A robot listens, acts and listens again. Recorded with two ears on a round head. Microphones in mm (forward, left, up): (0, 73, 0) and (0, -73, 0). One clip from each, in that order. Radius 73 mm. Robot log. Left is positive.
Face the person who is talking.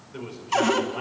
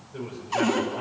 note: The man speaking: about 65° left or 115° left.
cmd yaw +65
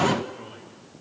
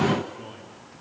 end: Found it: a man speaking, straight ahead, over 4 m away.